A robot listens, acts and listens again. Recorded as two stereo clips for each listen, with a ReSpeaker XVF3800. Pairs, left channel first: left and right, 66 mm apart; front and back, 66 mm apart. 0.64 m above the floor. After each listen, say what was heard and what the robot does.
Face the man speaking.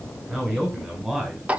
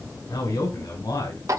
The man speaking: 10° right. Turn 10° right.
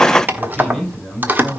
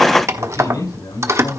Found it: a man speaking, straight ahead, over 4 m away.